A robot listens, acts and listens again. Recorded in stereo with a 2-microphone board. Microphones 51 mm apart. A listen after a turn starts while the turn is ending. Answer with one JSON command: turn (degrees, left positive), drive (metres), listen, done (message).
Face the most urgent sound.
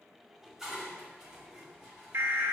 {"turn": -50}
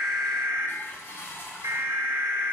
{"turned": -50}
{"turn": -75}
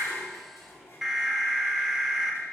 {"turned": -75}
{"turn": -10}
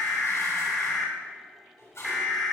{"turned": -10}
{"done": "Found it: an alarm, straight ahead, 2 to 4 m away."}